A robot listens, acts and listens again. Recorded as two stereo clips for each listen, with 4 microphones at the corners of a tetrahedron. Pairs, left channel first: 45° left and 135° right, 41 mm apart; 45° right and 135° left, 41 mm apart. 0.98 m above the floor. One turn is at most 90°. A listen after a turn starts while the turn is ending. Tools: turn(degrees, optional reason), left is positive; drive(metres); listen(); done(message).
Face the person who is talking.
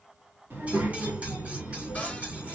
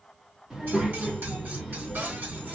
turn(degrees=-90, reason="The child speaking: 150° right.")
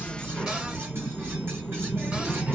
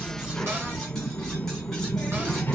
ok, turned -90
turn(degrees=-85, reason="The child speaking is now 85° right.")
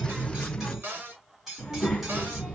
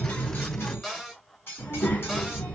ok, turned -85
turn(degrees=-15, reason="The child speaking is now 15° right.")
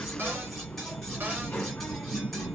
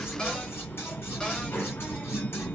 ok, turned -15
done("Facing the child speaking, 1 to 2 m away.")